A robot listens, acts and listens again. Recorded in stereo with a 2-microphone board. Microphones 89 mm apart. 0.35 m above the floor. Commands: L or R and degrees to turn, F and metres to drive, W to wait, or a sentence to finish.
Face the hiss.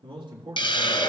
L70
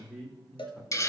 L35
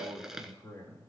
Facing the hiss, 1 to 2 m away.